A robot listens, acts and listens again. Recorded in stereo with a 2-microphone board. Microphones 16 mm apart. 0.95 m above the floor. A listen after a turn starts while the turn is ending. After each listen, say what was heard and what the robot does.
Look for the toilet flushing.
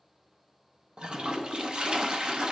The toilet flushing: about 70° right or 110° right. Turn 70° right.
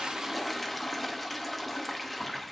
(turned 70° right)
Found it: a toilet flushing, straight ahead, under 1 m away.